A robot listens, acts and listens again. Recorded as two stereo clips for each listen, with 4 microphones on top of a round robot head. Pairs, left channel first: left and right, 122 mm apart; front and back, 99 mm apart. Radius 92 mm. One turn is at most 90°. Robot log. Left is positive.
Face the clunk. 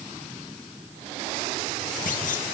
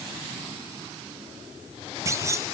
note: The clunk: 120° left.
cmd yaw +90
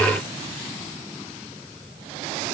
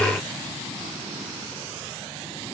note: Nothing new. It was at 30° left.
cmd yaw +30
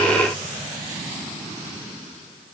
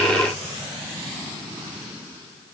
end: I heard a clunk from this way, but can't make it out now.